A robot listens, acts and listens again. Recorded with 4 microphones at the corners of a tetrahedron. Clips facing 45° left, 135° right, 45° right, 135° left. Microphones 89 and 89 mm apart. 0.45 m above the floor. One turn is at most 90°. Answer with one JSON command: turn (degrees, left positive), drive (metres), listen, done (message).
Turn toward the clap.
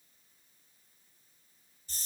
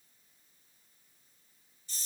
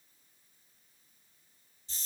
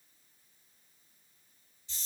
{"listen": true}
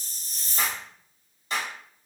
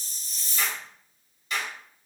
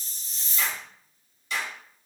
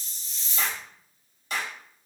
{"turn": 90}
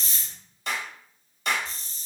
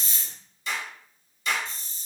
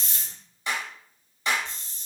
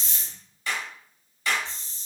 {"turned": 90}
{"turn": 20}
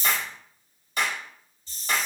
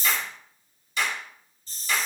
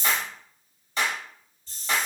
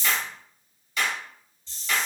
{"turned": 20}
{"done": "Facing the clap."}